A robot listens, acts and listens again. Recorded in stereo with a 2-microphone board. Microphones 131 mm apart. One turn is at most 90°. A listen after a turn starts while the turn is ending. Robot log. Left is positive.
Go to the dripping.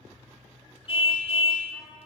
cmd idle
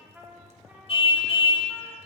cmd idle
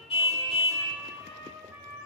end: I can't make out dripping to turn to.